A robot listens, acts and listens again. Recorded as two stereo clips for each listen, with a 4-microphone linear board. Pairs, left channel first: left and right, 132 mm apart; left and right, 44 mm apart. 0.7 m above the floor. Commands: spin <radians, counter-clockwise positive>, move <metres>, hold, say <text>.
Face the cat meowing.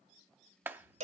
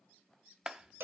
spin -1.05
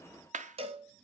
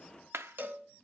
hold
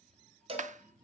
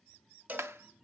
spin -0.26
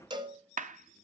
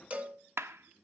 hold
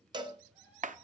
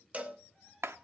spin -0.17
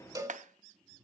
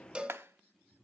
say Facing the cat meowing.